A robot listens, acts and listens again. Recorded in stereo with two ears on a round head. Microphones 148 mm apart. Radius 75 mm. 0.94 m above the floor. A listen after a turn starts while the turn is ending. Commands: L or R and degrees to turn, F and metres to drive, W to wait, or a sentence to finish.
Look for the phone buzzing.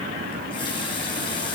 W
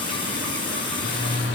L70
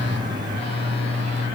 L35
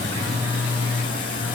R10
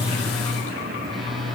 Found it: a phone buzzing, straight ahead, 1 to 2 m away.